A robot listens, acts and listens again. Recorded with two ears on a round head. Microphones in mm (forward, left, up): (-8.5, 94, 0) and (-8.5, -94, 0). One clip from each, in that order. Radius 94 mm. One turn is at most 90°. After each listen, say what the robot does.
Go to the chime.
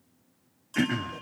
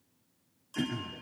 Turn 30° left.
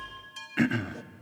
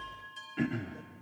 Turn 90° left.
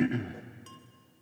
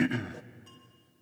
Turn 50° left.
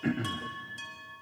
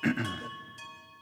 Drive 1.0 m forward.
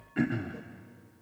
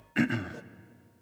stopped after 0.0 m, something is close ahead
Keep listening.
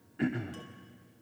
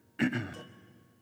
Keep listening.
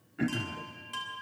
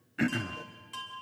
Blocked. The chime is further on, straight ahead.